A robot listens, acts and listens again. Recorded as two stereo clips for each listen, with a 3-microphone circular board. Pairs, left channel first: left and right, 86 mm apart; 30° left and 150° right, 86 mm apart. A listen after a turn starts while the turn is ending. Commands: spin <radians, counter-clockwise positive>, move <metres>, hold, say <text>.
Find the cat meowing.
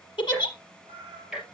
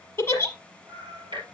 spin -1.92
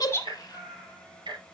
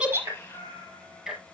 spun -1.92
spin -0.17
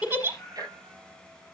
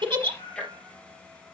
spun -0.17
say Facing the cat meowing.